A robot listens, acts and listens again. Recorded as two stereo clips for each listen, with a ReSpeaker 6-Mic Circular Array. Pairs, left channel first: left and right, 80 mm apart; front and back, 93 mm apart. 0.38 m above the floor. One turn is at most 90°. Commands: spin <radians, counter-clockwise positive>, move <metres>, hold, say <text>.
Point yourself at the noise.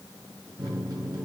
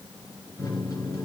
spin -0.87
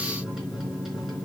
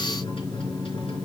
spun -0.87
say Facing the microwave.